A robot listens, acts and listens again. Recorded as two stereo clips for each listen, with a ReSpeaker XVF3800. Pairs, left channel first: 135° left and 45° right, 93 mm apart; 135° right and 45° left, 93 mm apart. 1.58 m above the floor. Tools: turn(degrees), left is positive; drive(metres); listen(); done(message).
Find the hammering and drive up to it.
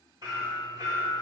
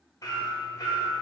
turn(degrees=-85)
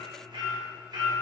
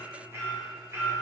turn(degrees=-15)
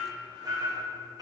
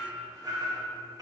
drive(metres=1.0)
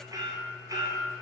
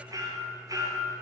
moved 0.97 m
drive(metres=1.0)
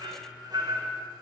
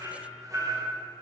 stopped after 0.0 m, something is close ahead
done("Arrived at the hammering, straight ahead.")